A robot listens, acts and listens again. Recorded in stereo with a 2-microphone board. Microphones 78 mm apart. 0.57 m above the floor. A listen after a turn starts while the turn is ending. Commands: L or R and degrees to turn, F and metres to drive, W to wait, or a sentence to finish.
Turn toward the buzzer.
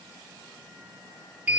W
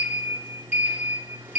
W
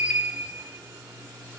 I can't make out a buzzer, only a sliding door.